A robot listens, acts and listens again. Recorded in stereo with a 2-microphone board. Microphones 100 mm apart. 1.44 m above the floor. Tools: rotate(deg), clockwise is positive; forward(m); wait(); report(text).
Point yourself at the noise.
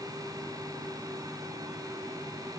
wait()
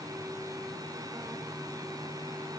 wait()
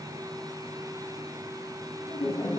rotate(-90)
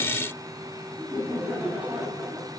rotate(10)
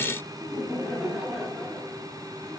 report("Found it: laughter, straight ahead.")